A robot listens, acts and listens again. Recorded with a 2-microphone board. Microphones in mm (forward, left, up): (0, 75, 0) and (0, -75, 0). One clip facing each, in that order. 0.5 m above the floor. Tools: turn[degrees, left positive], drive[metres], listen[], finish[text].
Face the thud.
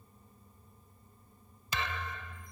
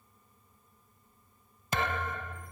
Thought: The thud: about 50° right or 130° right.
Action: turn[-50]
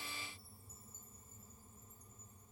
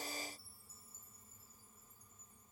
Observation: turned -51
Action: listen[]
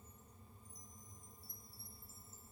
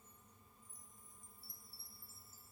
Action: finish[I heard a thud, but can't make it out now. It was about straight ahead or 80° right.]